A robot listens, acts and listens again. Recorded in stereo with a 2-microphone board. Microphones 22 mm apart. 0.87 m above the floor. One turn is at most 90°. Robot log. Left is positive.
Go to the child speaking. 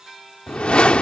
cmd idle
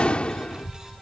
note: The child speaking: about 35° right or 145° right.
cmd yaw -35
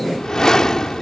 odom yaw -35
cmd idle
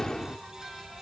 note: So it is at 110° right.
cmd yaw -90
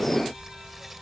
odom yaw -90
cmd fwd 1.0
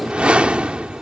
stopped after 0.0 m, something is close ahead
cmd idle
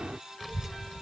end: Something is in my way. I am facing the child speaking but have not reached it.